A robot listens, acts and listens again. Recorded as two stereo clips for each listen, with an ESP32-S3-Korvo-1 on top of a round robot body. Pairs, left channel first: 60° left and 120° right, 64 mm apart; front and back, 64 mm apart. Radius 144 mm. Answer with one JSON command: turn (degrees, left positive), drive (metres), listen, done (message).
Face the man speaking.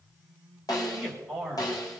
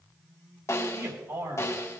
{"turn": 150}
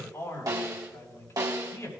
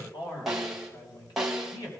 {"turn": 10}
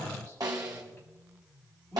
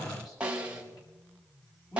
{"done": "Facing the man speaking, over 4 m away."}